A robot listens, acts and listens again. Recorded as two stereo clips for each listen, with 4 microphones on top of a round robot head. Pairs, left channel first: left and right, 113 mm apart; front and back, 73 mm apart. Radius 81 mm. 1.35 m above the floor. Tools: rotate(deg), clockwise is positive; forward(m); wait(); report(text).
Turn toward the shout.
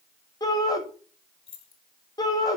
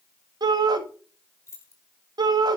rotate(-155)
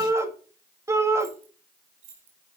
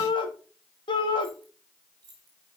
rotate(25)
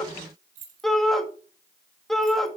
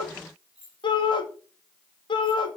report("Facing the shout.")